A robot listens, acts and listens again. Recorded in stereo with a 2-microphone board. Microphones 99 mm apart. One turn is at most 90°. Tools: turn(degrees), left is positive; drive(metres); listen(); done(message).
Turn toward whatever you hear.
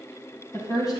turn(degrees=40)
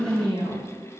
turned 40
turn(degrees=90)
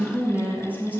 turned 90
turn(degrees=-20)
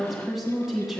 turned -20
done("Facing the woman speaking, 2 to 4 m away.")